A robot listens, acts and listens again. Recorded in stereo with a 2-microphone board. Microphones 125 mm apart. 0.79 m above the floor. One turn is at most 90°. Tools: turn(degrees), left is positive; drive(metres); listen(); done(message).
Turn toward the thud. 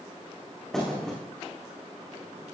turn(degrees=30)
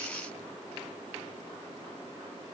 listen()
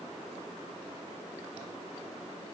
done("I heard a thud, but can't make it out now. It was about 25° right or 145° left.")